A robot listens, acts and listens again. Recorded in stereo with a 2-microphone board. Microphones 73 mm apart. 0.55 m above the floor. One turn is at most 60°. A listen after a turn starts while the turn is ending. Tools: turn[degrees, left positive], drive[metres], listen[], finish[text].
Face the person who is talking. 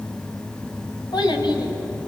Thought: The child speaking: about 75° left or 105° left.
Action: turn[60]
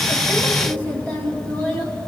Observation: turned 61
Thought: So it is at 20° left.
Action: turn[20]
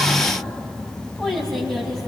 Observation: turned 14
Action: finish[Found it: a child speaking, straight ahead.]